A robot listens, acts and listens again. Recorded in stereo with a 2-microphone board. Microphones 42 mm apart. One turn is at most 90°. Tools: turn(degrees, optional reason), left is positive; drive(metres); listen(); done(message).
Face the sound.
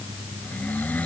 turn(degrees=45, reason="The snoring: about 45° left or 135° left.")
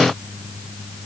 listen()
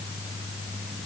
listen()
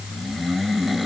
done("Found it: snoring, straight ahead.")